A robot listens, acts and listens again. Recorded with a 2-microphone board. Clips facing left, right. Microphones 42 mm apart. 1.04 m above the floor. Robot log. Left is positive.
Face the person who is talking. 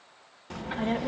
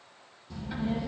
note: The child speaking: about 70° left or 110° left.
cmd yaw +70
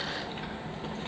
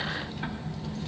note: So it is at 35° left.
cmd yaw +35
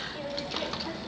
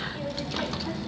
end: Facing the child speaking.